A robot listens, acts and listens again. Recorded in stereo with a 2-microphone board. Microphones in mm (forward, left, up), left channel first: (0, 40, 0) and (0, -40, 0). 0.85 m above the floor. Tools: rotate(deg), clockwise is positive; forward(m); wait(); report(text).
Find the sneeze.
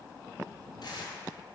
wait()
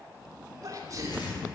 rotate(45)
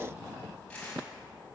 wait()
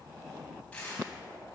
report("I heard a sneeze, but can't make it out now. It was about straight ahead or 90° right.")